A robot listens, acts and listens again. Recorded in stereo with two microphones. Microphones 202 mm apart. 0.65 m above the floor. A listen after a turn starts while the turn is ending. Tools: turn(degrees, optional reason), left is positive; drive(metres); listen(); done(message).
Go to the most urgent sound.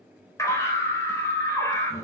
turn(degrees=15, reason="The scream: about 15° left or 165° left.")
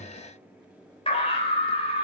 turn(degrees=150, reason="So it is at 150° left.")
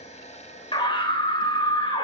turn(degrees=25, reason="The scream is now 25° left.")
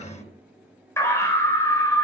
turn(degrees=15, reason="The scream is now 15° left.")
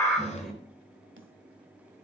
drive(metres=1.0)
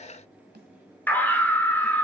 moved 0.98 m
turn(degrees=10, reason="The scream is now 10° left.")
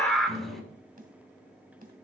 drive(metres=1.0)
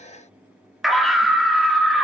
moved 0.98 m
drive(metres=1.0)
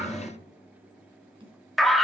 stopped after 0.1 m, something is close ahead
done("Arrived at the scream, straight ahead.")